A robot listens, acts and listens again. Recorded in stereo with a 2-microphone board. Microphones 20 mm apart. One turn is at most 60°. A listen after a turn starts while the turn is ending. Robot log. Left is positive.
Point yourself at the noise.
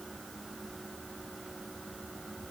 cmd idle
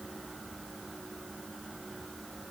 cmd idle
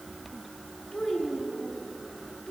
note: The child speaking: about 45° left or 135° left.
cmd yaw +45
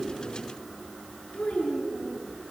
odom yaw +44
note: So it is at 90° left.
cmd yaw +60
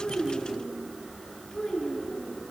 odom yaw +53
note: The child speaking is now 40° left.
cmd yaw +40
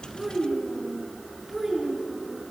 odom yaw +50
note: The child speaking is now 10° right.
cmd yaw -10
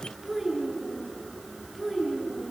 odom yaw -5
end: Facing the child speaking, over 4 m away.